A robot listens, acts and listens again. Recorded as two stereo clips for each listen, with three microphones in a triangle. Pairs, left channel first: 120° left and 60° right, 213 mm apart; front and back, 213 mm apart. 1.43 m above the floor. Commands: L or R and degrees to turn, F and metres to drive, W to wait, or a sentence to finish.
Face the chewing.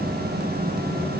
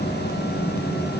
W
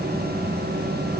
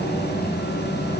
W
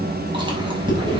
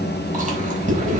R125
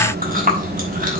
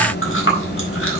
R10
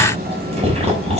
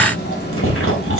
Found it: chewing, straight ahead, over 4 m away.